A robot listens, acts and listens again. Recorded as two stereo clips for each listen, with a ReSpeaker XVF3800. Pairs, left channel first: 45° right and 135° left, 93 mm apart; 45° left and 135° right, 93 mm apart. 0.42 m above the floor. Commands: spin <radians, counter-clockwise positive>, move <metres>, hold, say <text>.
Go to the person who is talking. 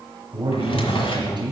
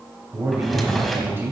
spin 2.88
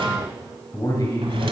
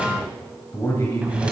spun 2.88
move 1.0
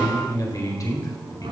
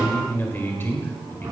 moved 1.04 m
spin -0.17
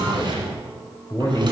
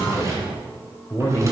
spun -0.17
move 1.0
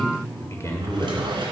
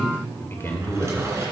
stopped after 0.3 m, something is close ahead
say Arrived at the man speaking, straight ahead.